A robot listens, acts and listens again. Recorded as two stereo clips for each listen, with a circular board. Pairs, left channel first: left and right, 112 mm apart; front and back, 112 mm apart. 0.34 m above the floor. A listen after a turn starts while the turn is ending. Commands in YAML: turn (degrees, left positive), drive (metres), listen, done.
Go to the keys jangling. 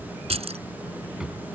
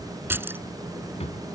turn: -110
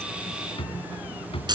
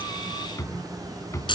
turn: -45
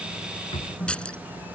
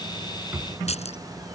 turn: 10
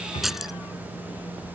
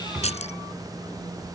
drive: 1.0
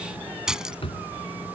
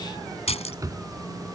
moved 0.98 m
drive: 1.0
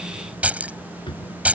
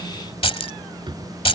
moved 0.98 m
turn: -15
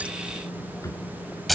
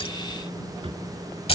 drive: 1.0
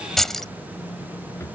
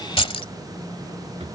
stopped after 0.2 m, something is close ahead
done: "I am next to the keys jangling."